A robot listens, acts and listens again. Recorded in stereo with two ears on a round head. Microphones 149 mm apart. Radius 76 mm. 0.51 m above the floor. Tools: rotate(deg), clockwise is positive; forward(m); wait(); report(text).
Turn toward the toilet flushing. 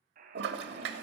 rotate(70)
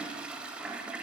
report("Facing the toilet flushing.")